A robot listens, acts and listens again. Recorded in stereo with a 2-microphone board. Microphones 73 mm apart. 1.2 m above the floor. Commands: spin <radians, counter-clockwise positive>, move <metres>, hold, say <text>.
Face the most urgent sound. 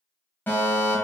spin 0.44
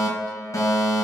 spin 2.18
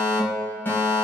spin 0.61
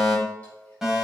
spin -0.17
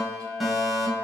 say Facing the fire alarm.